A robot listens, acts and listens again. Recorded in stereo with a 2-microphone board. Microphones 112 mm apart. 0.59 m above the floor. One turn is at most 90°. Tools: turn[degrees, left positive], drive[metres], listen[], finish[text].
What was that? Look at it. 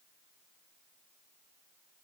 Action: listen[]
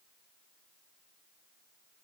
Action: listen[]
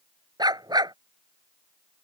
Thought: The dog barking: about 40° right or 140° right.
Action: turn[-40]
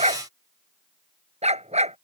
Thought: So it is at 100° right.
Action: turn[-90]
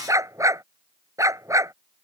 Thought: The dog barking is now 30° right.
Action: turn[-30]
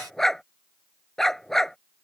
Action: finish[Facing the dog barking.]